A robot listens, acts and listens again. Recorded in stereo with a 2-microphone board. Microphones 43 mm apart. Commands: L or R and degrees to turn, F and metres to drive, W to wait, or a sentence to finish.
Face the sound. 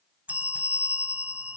R35
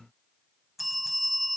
Found it: a bell, straight ahead.